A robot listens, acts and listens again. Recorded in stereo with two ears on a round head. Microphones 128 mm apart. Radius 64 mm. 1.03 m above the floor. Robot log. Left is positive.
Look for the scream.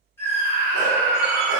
note: The scream: about 15° left or 165° left.
cmd yaw +15
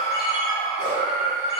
note: So it is at 150° left.
cmd yaw +150
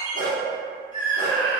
note: The scream is now 35° left.
cmd yaw +35
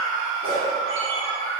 end: Facing the scream, 1 to 2 m away.